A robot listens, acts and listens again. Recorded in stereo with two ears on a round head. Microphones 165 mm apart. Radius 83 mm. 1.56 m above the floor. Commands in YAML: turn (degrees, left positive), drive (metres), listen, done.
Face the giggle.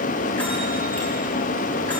listen: true
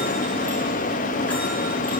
listen: true
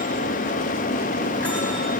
done: "I can't make out a giggle to turn to."